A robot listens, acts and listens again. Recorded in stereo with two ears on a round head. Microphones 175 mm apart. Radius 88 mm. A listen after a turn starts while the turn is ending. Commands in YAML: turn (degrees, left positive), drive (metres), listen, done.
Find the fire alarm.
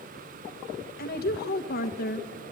listen: true
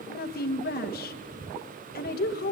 listen: true
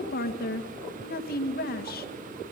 done: "I can't make out a fire alarm to turn to."